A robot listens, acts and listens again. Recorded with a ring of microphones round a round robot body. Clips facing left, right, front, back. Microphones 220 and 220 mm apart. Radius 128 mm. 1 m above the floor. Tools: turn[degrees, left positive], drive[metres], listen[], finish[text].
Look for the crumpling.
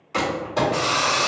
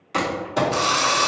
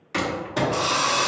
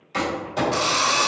Thought: The crumpling: 20° right.
Action: turn[-20]
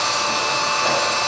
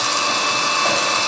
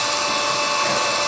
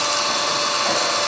Action: listen[]
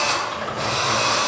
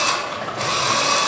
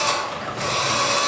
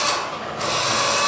Action: finish[Found it: crumpling, straight ahead, 1 to 2 m away.]